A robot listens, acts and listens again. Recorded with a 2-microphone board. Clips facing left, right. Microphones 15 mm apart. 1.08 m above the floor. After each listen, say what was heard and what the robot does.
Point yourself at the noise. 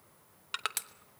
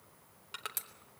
The crushing: about 40° left or 140° left. Turn 40° left.
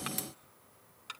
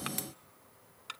Facing the crushing.